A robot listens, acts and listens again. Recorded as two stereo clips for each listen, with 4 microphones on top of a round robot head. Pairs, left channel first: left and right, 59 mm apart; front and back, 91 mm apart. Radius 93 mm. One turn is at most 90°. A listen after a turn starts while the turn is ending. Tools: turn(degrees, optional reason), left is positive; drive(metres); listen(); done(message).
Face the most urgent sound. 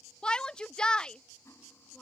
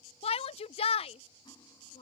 turn(degrees=15, reason="The shout: 15° left.")
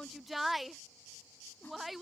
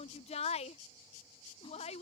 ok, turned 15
done("Found it: a shout, straight ahead.")